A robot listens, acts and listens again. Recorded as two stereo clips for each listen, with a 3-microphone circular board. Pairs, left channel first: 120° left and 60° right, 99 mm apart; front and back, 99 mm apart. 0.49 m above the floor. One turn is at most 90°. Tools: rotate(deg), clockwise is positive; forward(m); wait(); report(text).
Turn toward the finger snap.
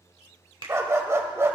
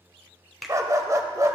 rotate(90)
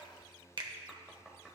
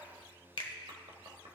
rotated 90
rotate(25)
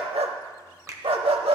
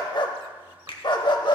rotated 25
report("Facing the finger snap.")